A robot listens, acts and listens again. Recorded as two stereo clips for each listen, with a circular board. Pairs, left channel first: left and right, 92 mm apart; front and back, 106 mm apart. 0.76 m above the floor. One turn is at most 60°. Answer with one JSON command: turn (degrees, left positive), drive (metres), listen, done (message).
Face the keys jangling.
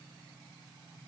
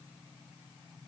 {"listen": true}
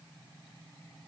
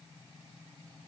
{"listen": true}
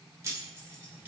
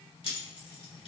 {"turn": -35}
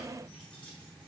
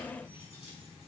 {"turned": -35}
{"listen": true}
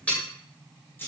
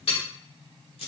{"turn": 25}
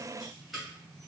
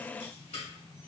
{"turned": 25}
{"done": "Facing the keys jangling, 2 to 4 m away."}